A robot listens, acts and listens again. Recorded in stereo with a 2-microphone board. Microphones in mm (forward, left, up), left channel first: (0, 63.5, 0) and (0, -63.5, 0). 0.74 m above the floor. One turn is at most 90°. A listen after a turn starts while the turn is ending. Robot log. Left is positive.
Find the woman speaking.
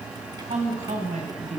note: The woman speaking: about 70° right or 110° right.
cmd yaw -70
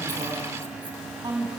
note: So it is at 35° right.
cmd yaw -35
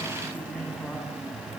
cmd idle
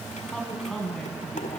end: Facing the woman speaking.